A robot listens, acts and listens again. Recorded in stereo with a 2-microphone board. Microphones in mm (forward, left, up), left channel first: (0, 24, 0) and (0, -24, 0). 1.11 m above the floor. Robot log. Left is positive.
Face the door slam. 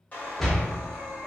cmd yaw +30
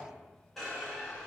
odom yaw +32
cmd idle
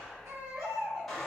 end: I heard a door slam, but can't make it out now. It was about 20° right or 135° left.